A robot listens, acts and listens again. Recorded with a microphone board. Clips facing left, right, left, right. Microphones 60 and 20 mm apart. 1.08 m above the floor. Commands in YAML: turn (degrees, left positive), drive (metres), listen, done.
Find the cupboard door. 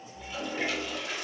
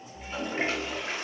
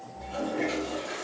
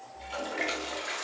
listen: true
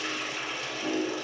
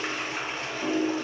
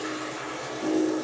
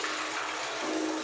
listen: true
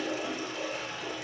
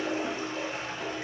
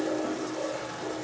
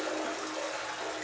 done: "I can't make out a cupboard door, only a toilet flushing."